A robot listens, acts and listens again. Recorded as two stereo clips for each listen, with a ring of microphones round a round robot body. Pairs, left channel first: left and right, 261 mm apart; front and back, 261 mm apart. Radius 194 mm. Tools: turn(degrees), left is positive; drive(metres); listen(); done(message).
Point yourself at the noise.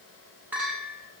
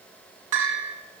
turn(degrees=-175)
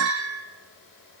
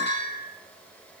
turn(degrees=-60)
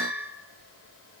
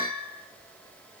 done("Found it: a bell, straight ahead, over 4 m away.")